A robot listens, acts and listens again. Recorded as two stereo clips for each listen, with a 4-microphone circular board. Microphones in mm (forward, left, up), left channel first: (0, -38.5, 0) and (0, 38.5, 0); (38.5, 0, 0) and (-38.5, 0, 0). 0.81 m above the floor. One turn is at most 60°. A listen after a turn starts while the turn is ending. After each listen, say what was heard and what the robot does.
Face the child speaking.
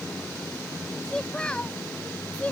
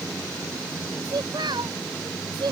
The child speaking: 160° right. Turn 60° right.
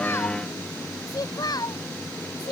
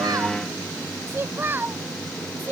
The child speaking is now 115° right. Turn 60° right.
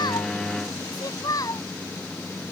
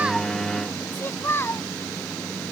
The child speaking is now 60° right. Turn 60° right.
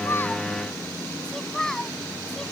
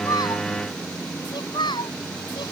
The child speaking is now 10° right. Turn 10° right.
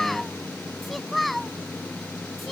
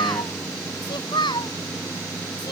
Found it: a child speaking, straight ahead.